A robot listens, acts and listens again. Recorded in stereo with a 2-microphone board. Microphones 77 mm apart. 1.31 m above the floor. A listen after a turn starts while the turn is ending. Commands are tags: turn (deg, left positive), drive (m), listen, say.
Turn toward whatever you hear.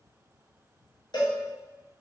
<turn deg="70"/>
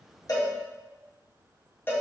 <turn deg="30"/>
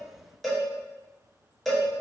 <say>Found it: a cowbell, straight ahead, under 1 m away.</say>